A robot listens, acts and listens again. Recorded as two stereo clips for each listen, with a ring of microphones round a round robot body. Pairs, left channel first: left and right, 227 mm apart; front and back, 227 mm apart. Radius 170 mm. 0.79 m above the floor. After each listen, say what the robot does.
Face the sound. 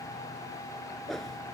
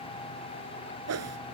Turn 180° left.
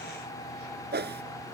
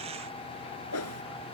Turn 45° right.
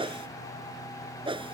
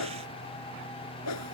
Turn 20° right.
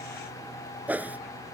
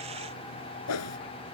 Found it: a whoosh, straight ahead.